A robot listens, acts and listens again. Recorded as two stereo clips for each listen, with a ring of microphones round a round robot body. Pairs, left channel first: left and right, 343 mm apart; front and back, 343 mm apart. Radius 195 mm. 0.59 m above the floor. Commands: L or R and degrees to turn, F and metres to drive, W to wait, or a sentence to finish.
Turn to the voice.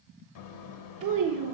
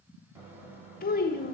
R65
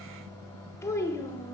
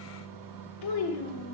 L10
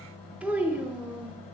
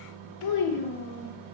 Facing the child speaking.